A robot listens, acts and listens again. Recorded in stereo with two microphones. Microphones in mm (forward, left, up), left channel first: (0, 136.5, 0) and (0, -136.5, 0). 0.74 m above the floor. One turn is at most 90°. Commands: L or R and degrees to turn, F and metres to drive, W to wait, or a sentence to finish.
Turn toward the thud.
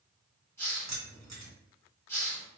W
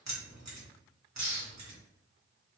W
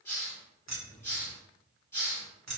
I can't make out a thud to turn to.